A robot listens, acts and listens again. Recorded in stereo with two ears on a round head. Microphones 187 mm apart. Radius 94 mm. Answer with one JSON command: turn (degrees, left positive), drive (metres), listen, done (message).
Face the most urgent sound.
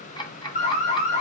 {"turn": 35}
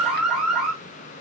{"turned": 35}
{"done": "Found it: an alarm, straight ahead, 2 to 4 m away."}